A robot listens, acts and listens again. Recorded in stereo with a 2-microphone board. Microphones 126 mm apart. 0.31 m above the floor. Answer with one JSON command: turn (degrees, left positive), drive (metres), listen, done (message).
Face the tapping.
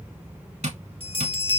{"turn": -70}
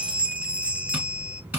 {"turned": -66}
{"turn": -10}
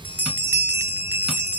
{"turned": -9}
{"listen": true}
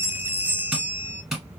{"done": "Found it: tapping, straight ahead."}